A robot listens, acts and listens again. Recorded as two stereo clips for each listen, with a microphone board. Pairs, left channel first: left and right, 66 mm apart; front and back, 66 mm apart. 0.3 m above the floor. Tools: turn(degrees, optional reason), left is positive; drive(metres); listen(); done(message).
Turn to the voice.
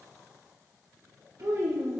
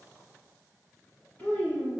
turn(degrees=-65, reason="The child speaking: 65° right.")
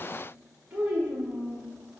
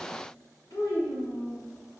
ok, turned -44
turn(degrees=-20, reason="The child speaking is now 20° right.")
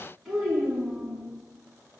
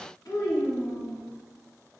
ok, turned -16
done("Found it: a child speaking, straight ahead, 1 to 2 m away.")